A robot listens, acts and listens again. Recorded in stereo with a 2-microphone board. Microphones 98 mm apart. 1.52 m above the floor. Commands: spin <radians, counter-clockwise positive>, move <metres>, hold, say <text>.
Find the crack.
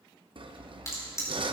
spin 0.52
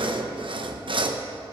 hold
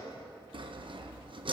say I heard a crack, but can't make it out now. It was about straight ahead or 120° left.